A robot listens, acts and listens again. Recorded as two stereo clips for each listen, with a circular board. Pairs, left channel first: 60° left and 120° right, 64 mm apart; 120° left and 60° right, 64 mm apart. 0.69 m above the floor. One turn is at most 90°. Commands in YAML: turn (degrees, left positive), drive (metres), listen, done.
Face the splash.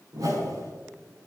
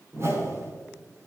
listen: true
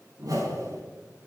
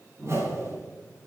listen: true
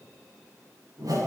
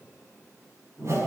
done: "I can't make out a splash to turn to."